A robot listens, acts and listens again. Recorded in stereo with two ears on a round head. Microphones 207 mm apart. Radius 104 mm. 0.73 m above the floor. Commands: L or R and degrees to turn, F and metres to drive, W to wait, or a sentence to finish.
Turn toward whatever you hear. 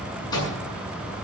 L20
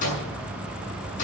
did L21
L140
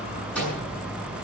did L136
Found it: a microwave, straight ahead, over 4 m away.